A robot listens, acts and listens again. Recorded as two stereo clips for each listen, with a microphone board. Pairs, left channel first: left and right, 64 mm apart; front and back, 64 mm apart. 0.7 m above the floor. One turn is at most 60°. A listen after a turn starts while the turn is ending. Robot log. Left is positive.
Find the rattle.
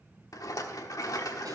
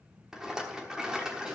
note: The rattle: 100° left.
cmd yaw +60
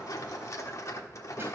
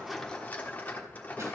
note: The rattle is now 60° left.
cmd yaw +60
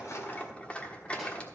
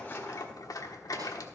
note: The rattle is now 20° left.
cmd yaw +20
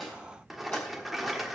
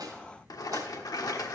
end: Facing the rattle, 1 to 2 m away.